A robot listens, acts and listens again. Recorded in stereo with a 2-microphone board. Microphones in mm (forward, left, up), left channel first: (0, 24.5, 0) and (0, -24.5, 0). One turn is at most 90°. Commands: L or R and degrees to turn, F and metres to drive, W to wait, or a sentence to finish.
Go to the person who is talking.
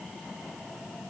W
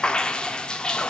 W
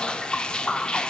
I can't make out anyone speaking to turn to.